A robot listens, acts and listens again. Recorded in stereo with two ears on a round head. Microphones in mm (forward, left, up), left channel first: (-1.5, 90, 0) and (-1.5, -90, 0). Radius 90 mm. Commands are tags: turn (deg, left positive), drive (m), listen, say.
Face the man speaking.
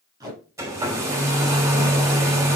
<listen/>
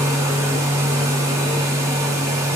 <listen/>
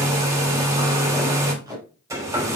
<say>I can't make out a man speaking, only tape being pulled and a hair dryer.</say>